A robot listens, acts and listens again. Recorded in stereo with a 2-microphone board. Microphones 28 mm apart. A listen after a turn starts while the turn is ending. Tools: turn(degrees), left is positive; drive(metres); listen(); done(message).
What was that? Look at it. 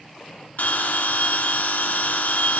turn(degrees=65)
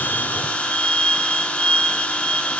turn(degrees=50)
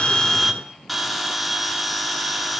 done("Facing the bell, 1 to 2 m away.")